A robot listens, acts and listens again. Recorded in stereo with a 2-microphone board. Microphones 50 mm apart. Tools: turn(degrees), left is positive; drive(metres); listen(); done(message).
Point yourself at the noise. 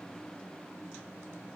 listen()
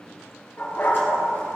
turn(degrees=45)
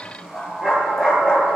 turn(degrees=-10)
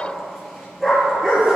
done("Found it: a dog barking, straight ahead, 2 to 4 m away.")